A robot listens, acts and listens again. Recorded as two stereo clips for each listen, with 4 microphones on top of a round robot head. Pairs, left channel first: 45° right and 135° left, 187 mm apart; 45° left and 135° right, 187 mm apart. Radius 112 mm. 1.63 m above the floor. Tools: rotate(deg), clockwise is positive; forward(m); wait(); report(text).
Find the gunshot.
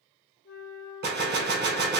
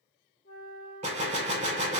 rotate(-170)
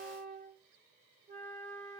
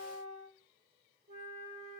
report("I heard a gunshot from this way, but can't make it out now.")